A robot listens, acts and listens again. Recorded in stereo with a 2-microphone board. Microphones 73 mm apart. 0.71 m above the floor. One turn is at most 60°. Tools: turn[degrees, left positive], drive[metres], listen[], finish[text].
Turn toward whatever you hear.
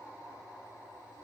Action: listen[]
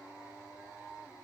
Action: listen[]
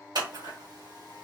Action: turn[-60]
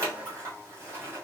Thought: So it is at 40° right.
Action: turn[-40]
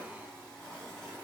Action: listen[]
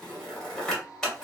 Thought: The scissors is now 10° left.
Action: turn[10]
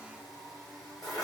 Action: finish[Facing the scissors, 2 to 4 m away.]